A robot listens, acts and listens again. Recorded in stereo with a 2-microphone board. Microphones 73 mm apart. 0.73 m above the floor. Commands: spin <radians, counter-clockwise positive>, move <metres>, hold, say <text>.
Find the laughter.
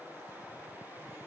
hold
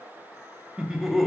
spin 0.52
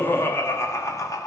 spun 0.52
spin 2.27
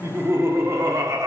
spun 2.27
spin -0.87
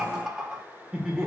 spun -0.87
spin -0.17
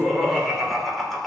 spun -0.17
say Found it: laughter, straight ahead.